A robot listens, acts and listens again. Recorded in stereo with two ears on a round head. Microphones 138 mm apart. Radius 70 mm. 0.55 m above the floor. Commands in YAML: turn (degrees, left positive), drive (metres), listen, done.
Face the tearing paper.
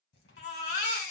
turn: 75
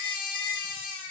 listen: true
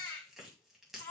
done: "Facing the tearing paper."